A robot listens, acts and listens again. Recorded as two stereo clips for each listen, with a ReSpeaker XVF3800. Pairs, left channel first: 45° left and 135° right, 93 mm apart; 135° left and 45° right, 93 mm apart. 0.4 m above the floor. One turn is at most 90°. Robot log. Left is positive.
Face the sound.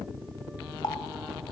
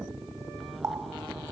note: The running tap: 10° left.
cmd yaw +10
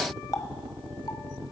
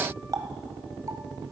end: Facing the running tap, 1 to 2 m away.